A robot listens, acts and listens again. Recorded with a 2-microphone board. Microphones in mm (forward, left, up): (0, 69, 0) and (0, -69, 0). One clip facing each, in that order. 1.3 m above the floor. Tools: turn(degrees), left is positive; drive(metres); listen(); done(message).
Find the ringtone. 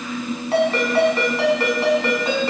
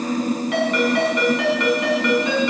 turn(degrees=30)
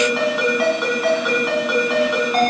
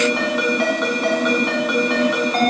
done("Facing the ringtone.")